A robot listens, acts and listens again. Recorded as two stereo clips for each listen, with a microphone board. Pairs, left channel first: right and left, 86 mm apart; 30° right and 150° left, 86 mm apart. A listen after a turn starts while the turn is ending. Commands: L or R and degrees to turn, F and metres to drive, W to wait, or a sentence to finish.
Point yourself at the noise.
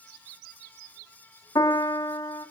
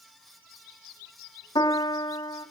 R50
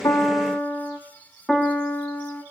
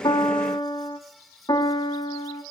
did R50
Found it: a piano, straight ahead.